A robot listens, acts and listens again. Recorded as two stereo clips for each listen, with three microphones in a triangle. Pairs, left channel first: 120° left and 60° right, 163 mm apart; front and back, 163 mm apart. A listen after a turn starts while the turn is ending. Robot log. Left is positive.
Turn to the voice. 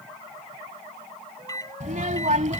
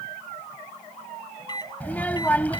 note: The child speaking: 80° right.
cmd yaw -80
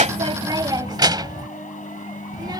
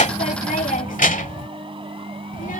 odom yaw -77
end: Found it: a child speaking, straight ahead.